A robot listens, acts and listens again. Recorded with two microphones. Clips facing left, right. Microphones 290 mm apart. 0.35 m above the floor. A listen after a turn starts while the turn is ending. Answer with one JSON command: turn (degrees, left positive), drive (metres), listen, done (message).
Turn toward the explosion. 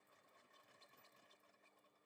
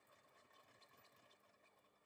{"listen": true}
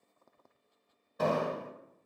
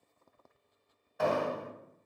{"turn": 45}
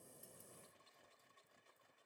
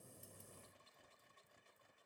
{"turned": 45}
{"listen": true}
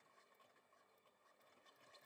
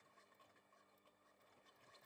{"done": "I heard an explosion, but can't make it out now. It was about straight ahead or 90° left."}